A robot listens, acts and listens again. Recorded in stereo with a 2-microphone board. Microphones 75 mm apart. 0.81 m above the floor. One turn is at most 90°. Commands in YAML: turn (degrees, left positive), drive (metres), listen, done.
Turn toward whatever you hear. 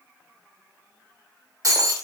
turn: -50
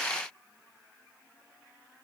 listen: true
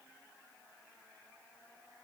done: "I heard breaking glass, but can't make it out now. It was about straight ahead or 80° right."